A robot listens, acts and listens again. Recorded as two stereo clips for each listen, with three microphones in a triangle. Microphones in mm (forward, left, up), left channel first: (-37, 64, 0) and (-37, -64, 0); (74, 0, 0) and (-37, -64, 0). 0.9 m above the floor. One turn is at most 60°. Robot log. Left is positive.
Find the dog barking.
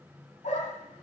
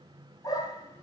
note: The dog barking: 85° left.
cmd yaw +60
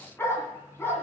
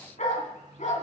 note: The dog barking is now 20° left.
cmd yaw +20
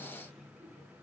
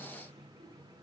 cmd idle
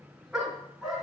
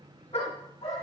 end: Found it: a dog barking, straight ahead, 2 to 4 m away.